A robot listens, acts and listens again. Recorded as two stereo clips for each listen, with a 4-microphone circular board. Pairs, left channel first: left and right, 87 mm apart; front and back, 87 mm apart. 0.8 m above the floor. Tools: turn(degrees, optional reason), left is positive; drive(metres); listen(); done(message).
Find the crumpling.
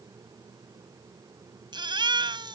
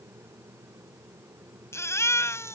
listen()
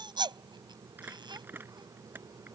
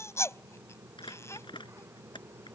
turn(degrees=-20, reason="The crumpling: 20° right.")
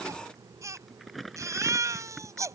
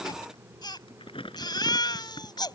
done("Found it: crumpling, straight ahead.")